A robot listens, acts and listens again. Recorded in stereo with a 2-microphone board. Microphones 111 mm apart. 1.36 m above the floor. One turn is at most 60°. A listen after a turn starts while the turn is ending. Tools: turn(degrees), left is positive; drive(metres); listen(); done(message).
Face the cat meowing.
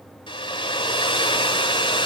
listen()
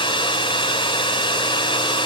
listen()
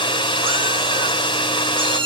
turn(degrees=-50)
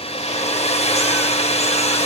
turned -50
listen()
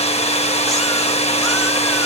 listen()
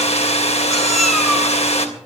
done("I heard a cat meowing, but can't make it out now. It was about straight ahead or 80° right.")